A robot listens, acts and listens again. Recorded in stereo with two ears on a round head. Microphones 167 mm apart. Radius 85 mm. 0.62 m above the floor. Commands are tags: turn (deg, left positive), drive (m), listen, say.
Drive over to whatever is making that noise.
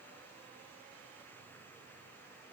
<listen/>
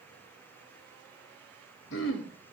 <turn deg="75"/>
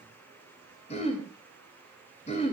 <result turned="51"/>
<turn deg="35"/>
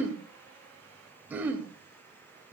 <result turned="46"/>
<turn deg="-10"/>
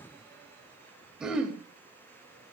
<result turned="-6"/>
<drive m="1.0"/>
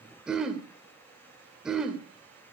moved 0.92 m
<drive m="1.0"/>
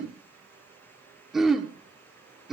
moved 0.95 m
<drive m="1.0"/>
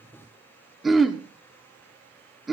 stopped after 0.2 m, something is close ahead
<say>Arrived at the throat clearing, straight ahead.</say>